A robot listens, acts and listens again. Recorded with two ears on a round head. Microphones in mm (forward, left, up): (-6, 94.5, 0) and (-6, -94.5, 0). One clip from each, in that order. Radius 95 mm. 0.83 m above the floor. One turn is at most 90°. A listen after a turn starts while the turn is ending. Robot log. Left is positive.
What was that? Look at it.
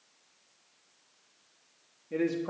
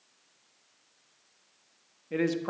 note: The man speaking: about 40° right or 140° right.
cmd yaw -40
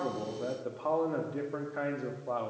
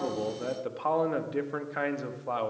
note: So it is at 90° right.
cmd yaw -90
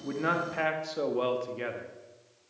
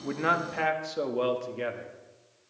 end: Facing the man speaking, 1 to 2 m away.